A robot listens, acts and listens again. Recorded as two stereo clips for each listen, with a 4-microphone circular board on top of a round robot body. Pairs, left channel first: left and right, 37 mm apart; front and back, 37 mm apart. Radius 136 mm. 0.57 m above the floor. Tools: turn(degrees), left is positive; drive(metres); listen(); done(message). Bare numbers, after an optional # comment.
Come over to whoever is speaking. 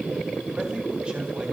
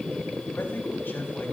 listen()
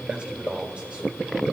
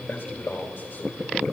# The man speaking: 30° right.
turn(-30)
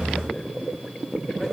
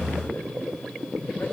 listen()
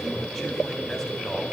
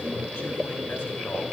listen()
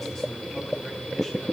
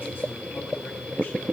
done("I heard a man speaking from this way, but can't make it out now. I did not reach it.")